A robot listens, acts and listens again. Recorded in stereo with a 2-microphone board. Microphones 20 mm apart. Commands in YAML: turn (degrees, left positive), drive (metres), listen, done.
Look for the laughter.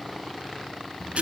listen: true
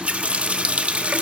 listen: true
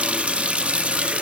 done: "I can't make out laughter, only a running tap."